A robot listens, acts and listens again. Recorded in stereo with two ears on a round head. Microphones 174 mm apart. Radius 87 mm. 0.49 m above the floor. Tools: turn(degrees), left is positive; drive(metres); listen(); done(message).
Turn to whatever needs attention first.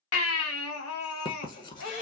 turn(degrees=90)
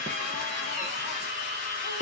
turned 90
listen()
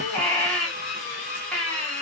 done("Found it: a baby crying, straight ahead.")